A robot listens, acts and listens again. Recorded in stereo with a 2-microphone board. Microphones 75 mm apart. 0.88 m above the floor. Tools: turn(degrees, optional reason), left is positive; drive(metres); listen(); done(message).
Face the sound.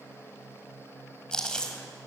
turn(degrees=30)
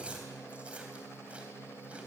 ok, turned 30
listen()
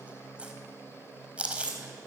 turn(degrees=-15, reason="So it is at 15° right.")
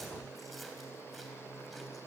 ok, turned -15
listen()
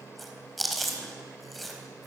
done("Found it: chewing, straight ahead.")